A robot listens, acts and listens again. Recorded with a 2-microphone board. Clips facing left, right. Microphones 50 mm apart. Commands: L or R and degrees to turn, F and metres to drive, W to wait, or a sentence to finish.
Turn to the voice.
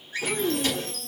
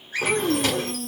R60
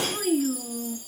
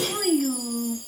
R55
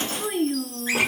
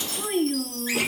R10
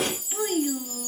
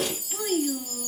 Found it: a child speaking, straight ahead.